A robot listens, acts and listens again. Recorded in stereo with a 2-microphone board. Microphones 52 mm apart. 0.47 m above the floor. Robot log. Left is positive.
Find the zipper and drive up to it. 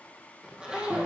note: The zipper: about 20° right or 160° right.
cmd yaw -20
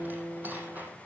note: So it is at 145° right.
cmd yaw -145
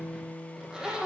note: The zipper is now 15° right.
cmd yaw -15
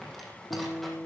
cmd fwd 1.0
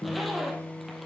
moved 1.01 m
cmd fwd 1.0
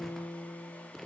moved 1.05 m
cmd fwd 1.0
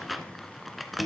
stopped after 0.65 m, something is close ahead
end: Arrived at the zipper, straight ahead.